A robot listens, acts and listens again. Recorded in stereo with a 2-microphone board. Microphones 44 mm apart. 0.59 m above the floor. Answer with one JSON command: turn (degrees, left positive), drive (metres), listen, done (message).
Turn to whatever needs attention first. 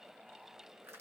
{"listen": true}
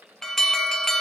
{"turn": 30}
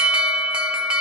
{"turn": -25}
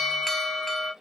{"done": "Found it: an alarm, straight ahead, under 1 m away."}